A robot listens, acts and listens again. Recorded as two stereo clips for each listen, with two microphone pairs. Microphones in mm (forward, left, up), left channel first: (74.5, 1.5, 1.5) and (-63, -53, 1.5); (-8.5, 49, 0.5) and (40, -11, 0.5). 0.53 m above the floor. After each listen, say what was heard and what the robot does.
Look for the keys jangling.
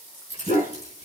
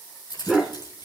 The keys jangling: 160° left. Turn 160° left.
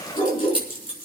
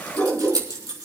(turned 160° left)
Found it: keys jangling, straight ahead, over 4 m away.